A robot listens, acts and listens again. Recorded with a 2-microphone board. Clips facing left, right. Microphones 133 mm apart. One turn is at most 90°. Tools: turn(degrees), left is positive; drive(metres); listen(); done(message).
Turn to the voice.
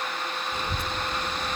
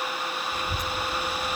turn(degrees=30)
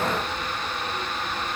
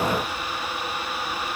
turn(degrees=90)
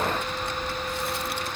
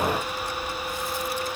turn(degrees=65)
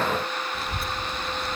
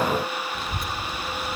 done("Found it: a child speaking, straight ahead.")